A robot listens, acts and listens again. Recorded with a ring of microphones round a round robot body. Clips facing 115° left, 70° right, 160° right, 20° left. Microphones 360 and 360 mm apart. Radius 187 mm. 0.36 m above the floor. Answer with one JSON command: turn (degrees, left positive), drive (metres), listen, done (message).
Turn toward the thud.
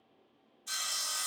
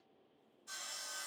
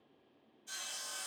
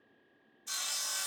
{"listen": true}
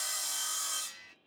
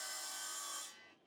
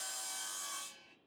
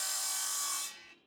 {"listen": true}
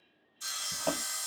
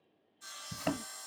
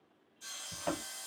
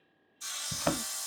{"turn": -15}
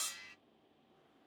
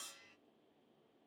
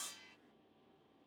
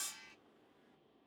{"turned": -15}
{"done": "Facing where the thud came from. I can't hear it now."}